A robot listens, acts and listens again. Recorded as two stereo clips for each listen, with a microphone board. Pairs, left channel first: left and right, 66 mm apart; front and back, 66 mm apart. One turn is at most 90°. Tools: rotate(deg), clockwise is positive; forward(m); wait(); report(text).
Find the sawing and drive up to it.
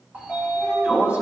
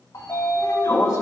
wait()
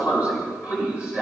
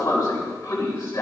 wait()
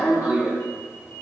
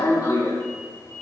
report("I can't make out sawing, only a sliding door.")